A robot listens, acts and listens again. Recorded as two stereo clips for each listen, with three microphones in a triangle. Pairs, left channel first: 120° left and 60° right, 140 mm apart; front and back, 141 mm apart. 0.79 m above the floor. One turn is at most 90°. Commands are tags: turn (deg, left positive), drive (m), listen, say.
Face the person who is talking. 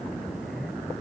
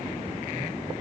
<listen/>
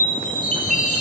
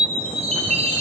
<listen/>
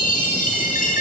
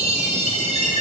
<say>I can't make out anyone speaking, only a chime.</say>